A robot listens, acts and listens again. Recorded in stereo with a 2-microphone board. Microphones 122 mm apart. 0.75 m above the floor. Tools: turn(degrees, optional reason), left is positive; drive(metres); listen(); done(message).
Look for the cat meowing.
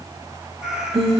turn(degrees=-30)
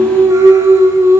listen()
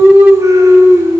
listen()
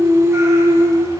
done("I heard a cat meowing, but can't make it out now. It was about 25° left or 145° right.")